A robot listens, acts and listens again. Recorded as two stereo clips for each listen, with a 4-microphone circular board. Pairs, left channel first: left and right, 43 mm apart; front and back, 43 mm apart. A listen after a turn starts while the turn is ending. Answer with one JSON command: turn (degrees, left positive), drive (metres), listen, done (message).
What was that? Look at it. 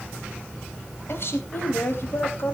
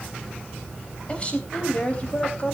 {"turn": 60}
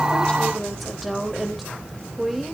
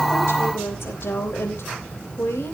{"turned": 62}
{"done": "Facing the woman speaking, 2 to 4 m away."}